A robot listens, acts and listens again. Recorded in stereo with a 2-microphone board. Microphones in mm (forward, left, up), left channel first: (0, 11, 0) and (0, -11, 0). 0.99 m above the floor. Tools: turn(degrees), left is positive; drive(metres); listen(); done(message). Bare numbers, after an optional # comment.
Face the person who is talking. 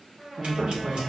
# The man speaking: about 65° right or 115° right.
turn(-65)
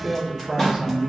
# So it is at 30° right.
turn(-30)
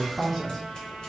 done("Found it: a man speaking, straight ahead, under 1 m away.")